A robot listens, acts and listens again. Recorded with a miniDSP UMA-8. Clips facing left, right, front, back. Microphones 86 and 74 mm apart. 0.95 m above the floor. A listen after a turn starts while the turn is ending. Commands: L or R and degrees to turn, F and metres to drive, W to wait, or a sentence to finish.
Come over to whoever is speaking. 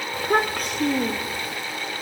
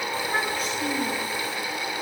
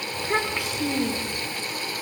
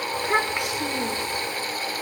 L110
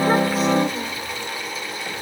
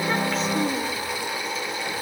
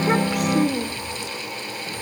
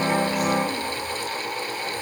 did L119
R10
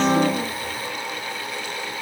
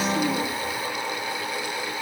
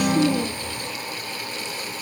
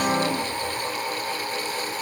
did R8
W
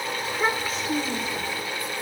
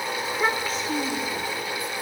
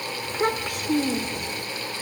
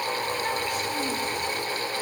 F1.0
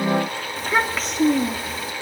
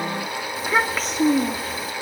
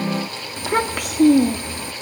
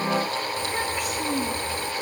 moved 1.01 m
F1.0
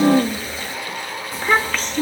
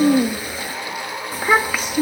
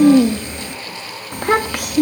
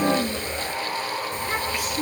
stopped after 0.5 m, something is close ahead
R10
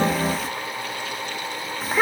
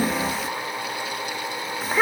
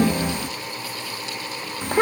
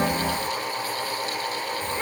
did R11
I am next to the child speaking.